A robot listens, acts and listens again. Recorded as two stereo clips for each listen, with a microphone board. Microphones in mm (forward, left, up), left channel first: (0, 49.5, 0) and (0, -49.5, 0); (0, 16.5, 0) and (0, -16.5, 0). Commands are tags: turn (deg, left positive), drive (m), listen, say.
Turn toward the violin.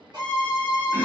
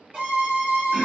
<turn deg="-50"/>
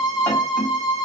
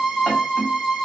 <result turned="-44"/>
<say>Found it: a violin, straight ahead, 1 to 2 m away.</say>